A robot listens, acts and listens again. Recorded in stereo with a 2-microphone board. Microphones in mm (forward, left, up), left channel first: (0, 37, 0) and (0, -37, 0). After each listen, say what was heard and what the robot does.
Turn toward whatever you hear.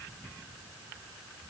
Keep listening.
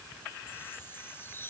The chime: about 30° left or 150° left. Turn 30° left.
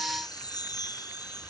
So it is at 120° left. Turn 120° left.
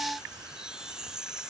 The chime is now 10° right. Turn 10° right.
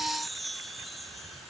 Facing the chime.